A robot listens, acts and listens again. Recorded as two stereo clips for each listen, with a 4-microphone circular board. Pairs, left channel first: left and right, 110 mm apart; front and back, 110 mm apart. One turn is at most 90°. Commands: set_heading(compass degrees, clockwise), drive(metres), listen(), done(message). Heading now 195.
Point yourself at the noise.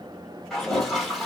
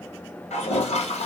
done("Facing the toilet flushing.")